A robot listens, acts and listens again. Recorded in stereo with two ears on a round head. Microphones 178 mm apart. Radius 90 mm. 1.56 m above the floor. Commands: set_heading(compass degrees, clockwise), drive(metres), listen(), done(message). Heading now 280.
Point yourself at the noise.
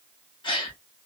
set_heading(255)
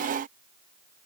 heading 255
listen()
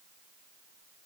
done("I heard a gasp, but can't make it out now. It was about straight ahead or 130° left.")